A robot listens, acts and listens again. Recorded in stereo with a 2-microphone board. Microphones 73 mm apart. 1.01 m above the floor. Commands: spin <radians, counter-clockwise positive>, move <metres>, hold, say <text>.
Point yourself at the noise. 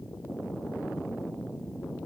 hold
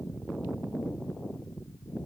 hold
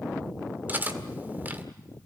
spin -0.44
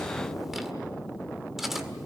say Facing the cutlery clinking.